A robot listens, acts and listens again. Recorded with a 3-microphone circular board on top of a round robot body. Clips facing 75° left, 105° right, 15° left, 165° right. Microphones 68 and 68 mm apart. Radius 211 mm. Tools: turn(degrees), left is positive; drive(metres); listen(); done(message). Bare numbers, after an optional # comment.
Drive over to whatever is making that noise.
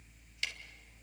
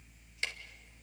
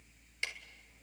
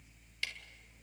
# The ticking: 50° right.
turn(-50)
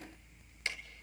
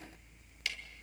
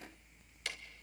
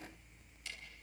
# The ticking is now 15° left.
turn(15)
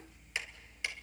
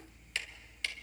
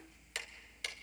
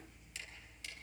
drive(1.0)
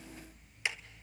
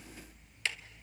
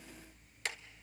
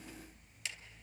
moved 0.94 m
drive(1.0)
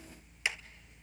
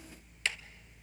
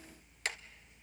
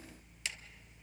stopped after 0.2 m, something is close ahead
done("I am next to the ticking.")